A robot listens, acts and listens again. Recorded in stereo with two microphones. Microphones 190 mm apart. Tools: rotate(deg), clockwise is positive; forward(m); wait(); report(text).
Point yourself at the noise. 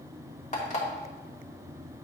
rotate(-40)
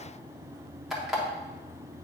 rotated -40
report("Found it: an alarm clock, straight ahead.")